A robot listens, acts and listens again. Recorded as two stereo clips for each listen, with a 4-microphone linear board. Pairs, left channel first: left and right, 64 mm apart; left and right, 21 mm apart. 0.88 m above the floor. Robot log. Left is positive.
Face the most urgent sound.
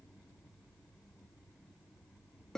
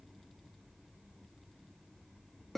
cmd idle
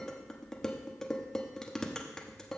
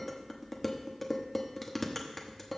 cmd idle
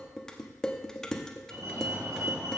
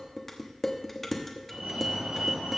note: The fire alarm: about 60° right or 120° right.
cmd yaw -60
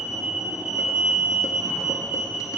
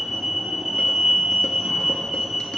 note: So it is at 20° right.
cmd yaw -20
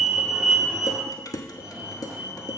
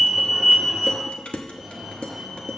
end: Facing the fire alarm.